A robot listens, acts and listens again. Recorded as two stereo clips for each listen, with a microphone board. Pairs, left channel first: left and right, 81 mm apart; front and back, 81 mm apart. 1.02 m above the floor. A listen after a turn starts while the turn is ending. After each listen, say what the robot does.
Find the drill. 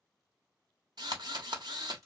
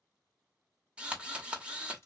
Turn 105° right.
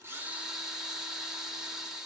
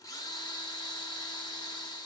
Facing the drill, under 1 m away.